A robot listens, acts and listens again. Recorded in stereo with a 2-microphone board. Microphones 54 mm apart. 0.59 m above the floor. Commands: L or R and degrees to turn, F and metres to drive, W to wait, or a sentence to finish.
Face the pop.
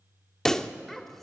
L30
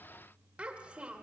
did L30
W
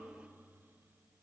I heard a pop, but can't make it out now. It was about 20° right or 140° left.